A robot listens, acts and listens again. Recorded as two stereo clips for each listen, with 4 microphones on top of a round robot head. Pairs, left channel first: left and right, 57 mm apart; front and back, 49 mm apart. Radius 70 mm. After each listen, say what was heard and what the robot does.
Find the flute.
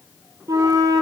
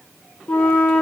The flute: 65° right. Turn 65° right.
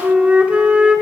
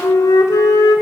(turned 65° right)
The flute is now 20° right. Turn 20° right.
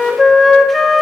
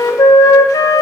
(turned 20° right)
Found it: a flute, straight ahead.